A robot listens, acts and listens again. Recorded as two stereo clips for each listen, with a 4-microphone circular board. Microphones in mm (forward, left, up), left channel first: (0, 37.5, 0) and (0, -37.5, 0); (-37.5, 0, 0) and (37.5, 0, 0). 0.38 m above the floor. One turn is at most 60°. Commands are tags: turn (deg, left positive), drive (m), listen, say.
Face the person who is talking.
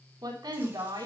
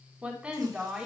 <turn deg="-60"/>
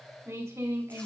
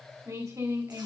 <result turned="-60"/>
<turn deg="-45"/>
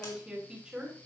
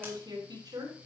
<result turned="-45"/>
<turn deg="-15"/>
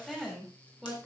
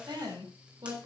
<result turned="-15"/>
<say>Found it: a woman speaking, straight ahead, over 4 m away.</say>